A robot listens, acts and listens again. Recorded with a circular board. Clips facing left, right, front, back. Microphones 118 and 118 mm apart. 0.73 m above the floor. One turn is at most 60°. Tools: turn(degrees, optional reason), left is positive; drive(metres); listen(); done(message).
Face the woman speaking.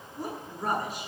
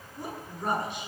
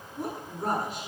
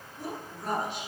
turn(degrees=45, reason="The woman speaking: 45° left.")
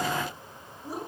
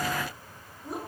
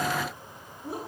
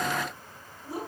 done("Facing the woman speaking.")